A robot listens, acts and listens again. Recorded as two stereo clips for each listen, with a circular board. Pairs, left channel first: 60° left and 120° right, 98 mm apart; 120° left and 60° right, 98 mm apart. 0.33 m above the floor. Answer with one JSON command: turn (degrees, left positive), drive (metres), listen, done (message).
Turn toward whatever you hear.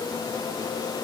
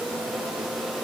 {"listen": true}
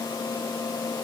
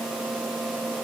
{"listen": true}
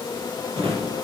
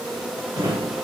{"turn": -115}
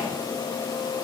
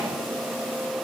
{"listen": true}
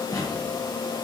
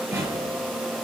{"done": "Facing the drawer."}